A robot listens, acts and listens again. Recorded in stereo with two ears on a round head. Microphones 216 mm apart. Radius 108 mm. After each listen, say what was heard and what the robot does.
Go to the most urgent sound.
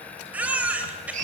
Turn 30° right.
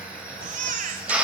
So it is at 145° right. Turn 145° right.
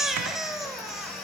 Drive 1.0 m forward.
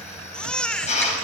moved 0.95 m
Drive 1.0 m forward.
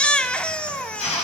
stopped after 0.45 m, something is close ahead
I am next to the baby crying.